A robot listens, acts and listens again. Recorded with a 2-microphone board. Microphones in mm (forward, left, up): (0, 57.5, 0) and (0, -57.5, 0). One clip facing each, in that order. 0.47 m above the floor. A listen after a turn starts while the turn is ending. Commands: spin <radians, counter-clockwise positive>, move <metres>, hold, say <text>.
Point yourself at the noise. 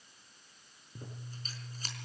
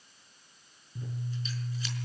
spin 0.79
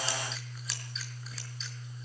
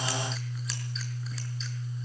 say Found it: scissors, straight ahead, over 4 m away.